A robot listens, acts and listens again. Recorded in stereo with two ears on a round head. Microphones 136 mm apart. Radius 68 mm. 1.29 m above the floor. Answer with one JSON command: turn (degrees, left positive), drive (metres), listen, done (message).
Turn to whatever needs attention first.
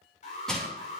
{"turn": 50}
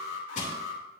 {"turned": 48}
{"turn": 80}
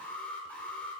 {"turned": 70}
{"turn": 10}
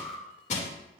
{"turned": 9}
{"done": "Facing the alarm."}